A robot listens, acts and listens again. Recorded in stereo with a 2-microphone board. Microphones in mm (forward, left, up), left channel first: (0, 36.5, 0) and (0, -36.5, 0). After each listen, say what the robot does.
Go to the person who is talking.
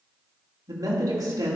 Turn 55° right.
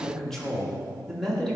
Drive 1.0 m forward.
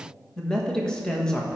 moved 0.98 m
Turn 10° left.
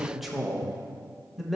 Drive 1.0 m forward.
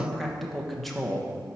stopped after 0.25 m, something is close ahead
I am next to the man speaking.